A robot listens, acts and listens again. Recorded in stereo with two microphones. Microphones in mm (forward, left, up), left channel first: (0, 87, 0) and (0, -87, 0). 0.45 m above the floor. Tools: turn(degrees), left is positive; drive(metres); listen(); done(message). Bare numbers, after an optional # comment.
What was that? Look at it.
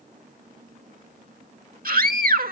# The scream: about 60° right or 120° right.
turn(-60)
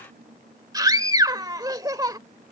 # So it is at 25° right.
turn(-25)
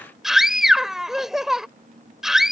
done("Facing the scream.")